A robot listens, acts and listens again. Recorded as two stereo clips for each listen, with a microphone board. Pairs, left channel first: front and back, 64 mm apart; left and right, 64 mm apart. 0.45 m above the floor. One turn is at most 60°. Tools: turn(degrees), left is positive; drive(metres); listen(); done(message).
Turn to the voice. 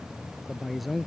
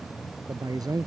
turn(degrees=-60)
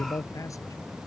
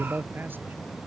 turn(degrees=-35)
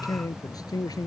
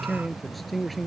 done("Facing the man speaking.")